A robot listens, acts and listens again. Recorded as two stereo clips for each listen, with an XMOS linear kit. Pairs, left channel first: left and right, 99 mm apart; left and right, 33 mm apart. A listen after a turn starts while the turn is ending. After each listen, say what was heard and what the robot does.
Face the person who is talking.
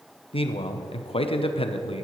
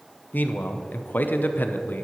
The man speaking: about 70° left or 110° left. Turn 70° left.
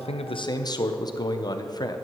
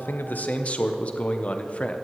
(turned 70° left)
So it is at 40° left. Turn 40° left.
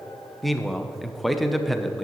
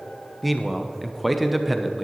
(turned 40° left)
Found it: a man speaking, straight ahead, under 1 m away.